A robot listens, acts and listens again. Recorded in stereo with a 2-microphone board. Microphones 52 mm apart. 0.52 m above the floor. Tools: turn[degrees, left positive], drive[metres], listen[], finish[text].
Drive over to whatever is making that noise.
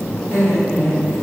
Thought: The laughter: about 70° left or 110° left.
Action: turn[70]
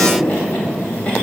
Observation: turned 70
Thought: So it is at 25° left.
Action: turn[25]
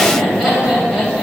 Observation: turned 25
Action: drive[1.0]
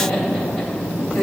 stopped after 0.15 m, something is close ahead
Thought: The laughter is now 10° left.
Action: turn[10]
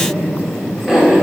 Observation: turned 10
Action: finish[Blocked. The laughter is further on, straight ahead.]